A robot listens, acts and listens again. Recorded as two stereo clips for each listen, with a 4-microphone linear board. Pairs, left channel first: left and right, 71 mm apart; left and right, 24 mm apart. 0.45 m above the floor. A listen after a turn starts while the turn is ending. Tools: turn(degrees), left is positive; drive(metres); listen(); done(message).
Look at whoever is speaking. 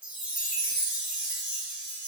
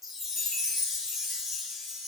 listen()
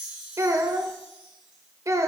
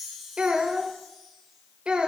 turn(degrees=-45)
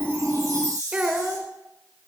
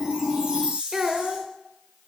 turn(degrees=-15)
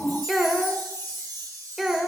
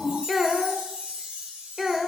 done("Facing the child speaking, 1 to 2 m away.")